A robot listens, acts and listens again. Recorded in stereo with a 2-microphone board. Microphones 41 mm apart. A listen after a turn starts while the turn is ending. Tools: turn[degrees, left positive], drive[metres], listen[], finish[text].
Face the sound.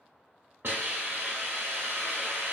Thought: The hiss: about 70° right or 110° right.
Action: turn[-70]
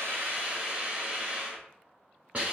Thought: So it is at 40° right.
Action: turn[-40]
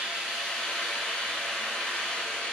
Thought: The hiss is now 10° left.
Action: turn[10]
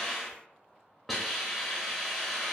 Action: finish[Found it: a hiss, straight ahead.]